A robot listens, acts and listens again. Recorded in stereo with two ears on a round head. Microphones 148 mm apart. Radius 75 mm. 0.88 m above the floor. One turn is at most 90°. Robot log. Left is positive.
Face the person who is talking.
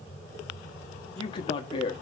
note: The man speaking: about 30° left or 150° left.
cmd yaw +30
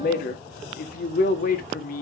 note: So it is at 120° left.
cmd yaw +90
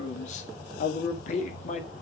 note: The man speaking is now 50° left.
cmd yaw +50
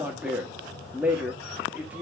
note: The man speaking is now 10° right.
cmd yaw -10
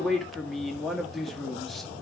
end: Facing the man speaking, 1 to 2 m away.